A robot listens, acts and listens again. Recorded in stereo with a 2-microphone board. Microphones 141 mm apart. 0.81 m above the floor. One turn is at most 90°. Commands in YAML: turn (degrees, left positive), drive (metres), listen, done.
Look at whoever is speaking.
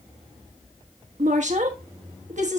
turn: -60
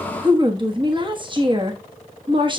turn: -40
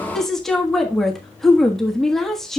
done: "Found it: a woman speaking, straight ahead, 1 to 2 m away."